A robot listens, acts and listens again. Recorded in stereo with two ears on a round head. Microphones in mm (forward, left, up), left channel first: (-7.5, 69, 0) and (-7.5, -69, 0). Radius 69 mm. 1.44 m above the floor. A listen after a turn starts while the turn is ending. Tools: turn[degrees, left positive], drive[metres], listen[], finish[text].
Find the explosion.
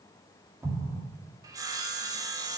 Thought: The explosion: about 20° right or 160° right.
Action: turn[-20]
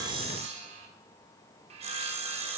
Action: listen[]
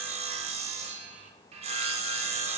Action: finish[I heard an explosion, but can't make it out now. It was about straight ahead or 140° right.]